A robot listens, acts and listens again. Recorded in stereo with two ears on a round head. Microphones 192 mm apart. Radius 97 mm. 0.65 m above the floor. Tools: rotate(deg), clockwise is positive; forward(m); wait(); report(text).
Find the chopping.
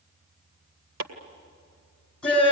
rotate(65)
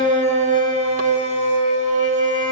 wait()
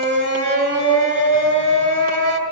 wait()
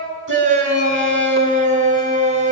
report("I heard chopping, but can't make it out now. It was about straight ahead or 50° right.")